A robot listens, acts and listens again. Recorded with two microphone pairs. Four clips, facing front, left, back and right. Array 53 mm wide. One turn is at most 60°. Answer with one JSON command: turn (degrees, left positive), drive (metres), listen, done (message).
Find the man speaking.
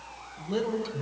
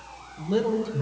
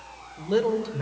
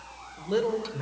{"turn": -60}
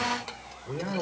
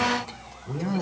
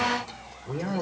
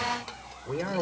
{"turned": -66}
{"turn": -60}
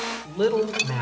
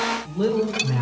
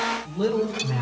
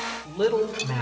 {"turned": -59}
{"turn": -30}
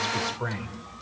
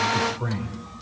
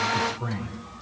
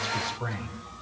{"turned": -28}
{"done": "Found it: a man speaking, straight ahead."}